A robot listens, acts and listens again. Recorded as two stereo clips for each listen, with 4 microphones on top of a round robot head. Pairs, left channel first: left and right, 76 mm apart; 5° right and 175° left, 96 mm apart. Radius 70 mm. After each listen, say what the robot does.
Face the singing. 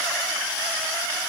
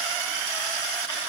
Keep listening.
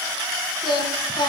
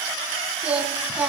Turn 100° left.
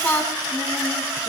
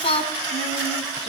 Turn 15° left.
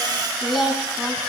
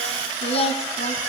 Found it: singing, straight ahead, 2 to 4 m away.